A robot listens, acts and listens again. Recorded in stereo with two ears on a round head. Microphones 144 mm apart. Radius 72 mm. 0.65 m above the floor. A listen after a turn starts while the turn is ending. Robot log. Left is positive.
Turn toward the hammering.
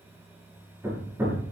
note: The hammering: about 15° right or 165° right.
cmd yaw -15
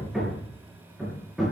end: Facing the hammering, over 4 m away.